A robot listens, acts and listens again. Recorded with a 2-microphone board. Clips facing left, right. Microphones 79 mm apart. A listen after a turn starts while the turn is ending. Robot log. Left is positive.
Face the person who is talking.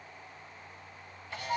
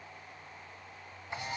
cmd idle
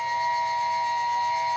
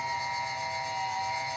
cmd idle
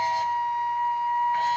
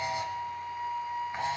end: I can't make out anyone speaking, only a flute and a camera shutter.